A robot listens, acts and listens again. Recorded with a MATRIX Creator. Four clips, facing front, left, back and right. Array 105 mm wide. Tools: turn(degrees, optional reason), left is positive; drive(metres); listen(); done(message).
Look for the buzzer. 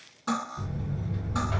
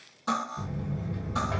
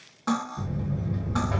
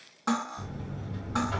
turn(degrees=135, reason="The buzzer: 135° left.")
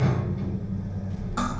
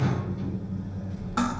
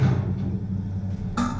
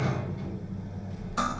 turn(degrees=-10, reason="The buzzer is now 10° right.")
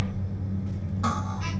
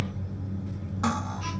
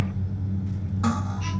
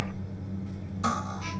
done("Facing the buzzer.")